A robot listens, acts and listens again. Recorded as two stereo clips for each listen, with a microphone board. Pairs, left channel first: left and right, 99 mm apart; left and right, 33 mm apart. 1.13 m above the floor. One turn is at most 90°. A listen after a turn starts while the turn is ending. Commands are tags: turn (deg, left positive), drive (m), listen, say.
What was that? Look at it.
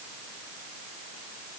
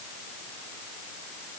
<listen/>
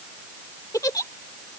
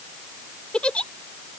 <turn deg="35"/>
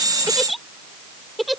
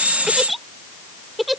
<say>Facing the giggle.</say>